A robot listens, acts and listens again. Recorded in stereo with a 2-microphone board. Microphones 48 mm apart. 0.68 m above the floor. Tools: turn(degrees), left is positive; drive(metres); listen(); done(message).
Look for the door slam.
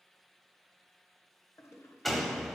turn(degrees=30)
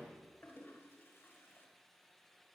listen()
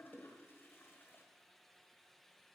done("I heard a door slam, but can't make it out now. It was about 25° right or 145° left.")